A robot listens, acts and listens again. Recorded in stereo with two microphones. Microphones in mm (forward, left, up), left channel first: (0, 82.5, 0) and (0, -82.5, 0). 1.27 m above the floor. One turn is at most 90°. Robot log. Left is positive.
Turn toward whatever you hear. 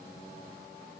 cmd idle
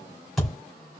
cmd yaw +30
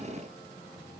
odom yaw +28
cmd idle
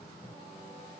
end: I heard a thud, but can't make it out now. It was about 30° right or 150° left.